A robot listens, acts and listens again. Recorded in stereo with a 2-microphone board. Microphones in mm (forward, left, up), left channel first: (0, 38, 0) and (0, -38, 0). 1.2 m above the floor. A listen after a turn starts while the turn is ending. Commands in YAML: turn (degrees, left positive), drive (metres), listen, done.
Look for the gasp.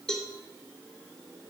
listen: true
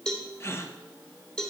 turn: 35
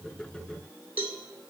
listen: true
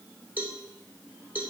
done: "I heard a gasp, but can't make it out now. It was about straight ahead or 110° left."